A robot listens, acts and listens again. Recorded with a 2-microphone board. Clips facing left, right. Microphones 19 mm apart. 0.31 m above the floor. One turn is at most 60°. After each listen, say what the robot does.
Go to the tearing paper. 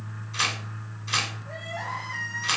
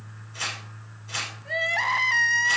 Turn 60° left.
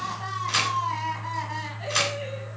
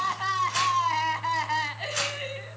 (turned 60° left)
Turn 55° left.
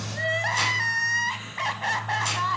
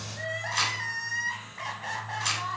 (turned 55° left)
Keep listening.
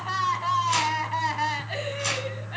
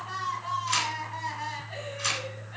Turn 15° right.
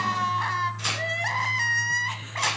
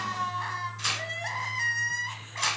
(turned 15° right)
Drive 1.0 m forward.
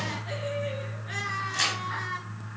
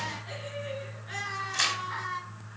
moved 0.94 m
Turn 10° right.
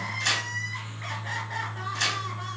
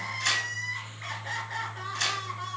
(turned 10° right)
Drive 1.0 m forward.
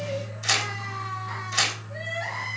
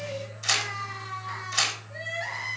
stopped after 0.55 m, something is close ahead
I am next to the tearing paper.